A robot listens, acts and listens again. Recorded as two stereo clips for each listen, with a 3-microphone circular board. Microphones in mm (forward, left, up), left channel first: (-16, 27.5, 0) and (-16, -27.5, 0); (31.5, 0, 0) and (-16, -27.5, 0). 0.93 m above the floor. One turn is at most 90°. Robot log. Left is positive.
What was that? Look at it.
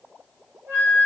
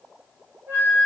note: The flute: 115° right.
cmd yaw -90
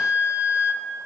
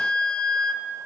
note: The flute is now 45° right.
cmd yaw -45
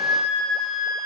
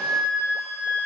note: The flute is now 10° right.
cmd yaw -10
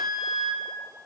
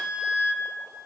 end: Found it: a flute, straight ahead.